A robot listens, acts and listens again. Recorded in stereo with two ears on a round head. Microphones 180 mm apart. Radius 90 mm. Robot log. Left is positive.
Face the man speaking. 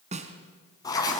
cmd idle
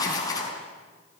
cmd idle
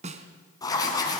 end: I can't make out a man speaking to turn to.